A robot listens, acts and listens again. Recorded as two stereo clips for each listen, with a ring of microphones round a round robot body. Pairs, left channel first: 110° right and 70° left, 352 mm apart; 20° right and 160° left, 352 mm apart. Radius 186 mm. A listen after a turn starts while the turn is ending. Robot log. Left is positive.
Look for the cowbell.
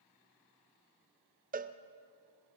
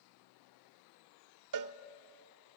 note: The cowbell: 130° left.
cmd yaw +130
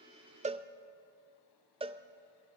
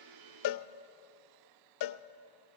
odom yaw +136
end: Found it: a cowbell, straight ahead, under 1 m away.